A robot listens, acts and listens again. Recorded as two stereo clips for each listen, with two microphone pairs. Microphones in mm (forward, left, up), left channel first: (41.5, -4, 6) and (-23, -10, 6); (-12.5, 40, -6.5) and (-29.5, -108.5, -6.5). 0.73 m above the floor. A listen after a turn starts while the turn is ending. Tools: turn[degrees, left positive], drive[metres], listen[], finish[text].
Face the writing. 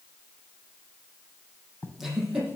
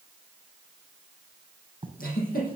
Thought: The writing: 45° right.
Action: turn[-45]
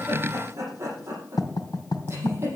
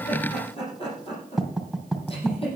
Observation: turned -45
Thought: The writing is now 10° right.
Action: turn[-10]
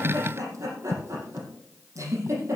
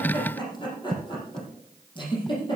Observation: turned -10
Action: finish[Facing the writing.]